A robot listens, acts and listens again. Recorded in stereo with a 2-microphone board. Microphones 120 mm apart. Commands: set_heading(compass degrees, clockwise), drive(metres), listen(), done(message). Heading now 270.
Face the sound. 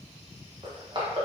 set_heading(310)
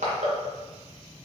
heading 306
set_heading(51)
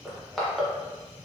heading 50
done("Found it: crushing, straight ahead.")